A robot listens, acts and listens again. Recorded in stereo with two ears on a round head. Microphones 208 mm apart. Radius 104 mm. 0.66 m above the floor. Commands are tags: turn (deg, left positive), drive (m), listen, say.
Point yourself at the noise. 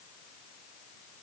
<listen/>
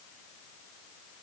<listen/>
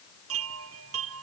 <turn deg="-65"/>
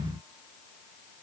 <listen/>
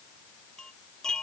<say>Facing the chime.</say>